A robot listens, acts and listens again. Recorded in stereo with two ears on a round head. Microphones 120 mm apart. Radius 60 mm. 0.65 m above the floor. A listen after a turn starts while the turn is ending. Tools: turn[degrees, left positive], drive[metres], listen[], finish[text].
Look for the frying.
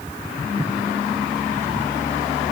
Action: listen[]
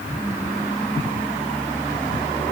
Action: listen[]
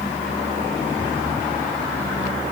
Action: finish[I can't make out frying.]